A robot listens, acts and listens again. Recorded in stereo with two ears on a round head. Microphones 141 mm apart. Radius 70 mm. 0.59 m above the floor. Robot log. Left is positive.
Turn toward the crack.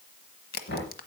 note: The crack: about 65° left or 115° left.
cmd yaw +65
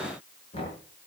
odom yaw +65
cmd idle
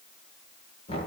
end: I heard a crack, but can't make it out now. It was about straight ahead or 50° left.